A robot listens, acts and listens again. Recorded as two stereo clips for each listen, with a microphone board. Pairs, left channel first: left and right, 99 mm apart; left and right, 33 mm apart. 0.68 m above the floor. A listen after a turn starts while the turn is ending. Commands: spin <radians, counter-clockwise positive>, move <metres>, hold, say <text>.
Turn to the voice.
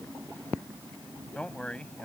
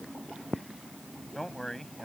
spin 0.52
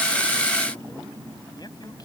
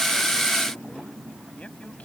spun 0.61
hold
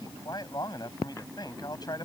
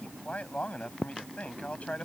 spin 2.36
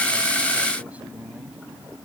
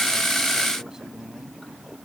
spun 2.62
spin -0.26
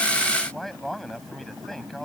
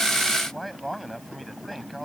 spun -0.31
say Facing the man speaking.